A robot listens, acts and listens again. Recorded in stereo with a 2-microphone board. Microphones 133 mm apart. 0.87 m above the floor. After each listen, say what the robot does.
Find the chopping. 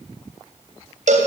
Keep listening.
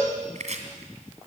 Turn 60° right.
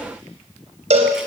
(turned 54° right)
Keep listening.
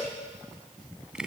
Facing the chopping.